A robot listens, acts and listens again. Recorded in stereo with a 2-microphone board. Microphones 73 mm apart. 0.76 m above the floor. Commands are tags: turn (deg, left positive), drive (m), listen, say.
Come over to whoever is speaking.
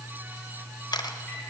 <listen/>
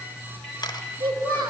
<turn deg="-70"/>
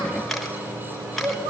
<turn deg="-40"/>
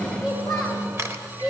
<drive m="1.0"/>
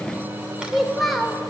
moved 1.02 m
<drive m="1.0"/>
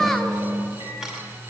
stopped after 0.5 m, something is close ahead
<say>Arrived at the child speaking, straight ahead.</say>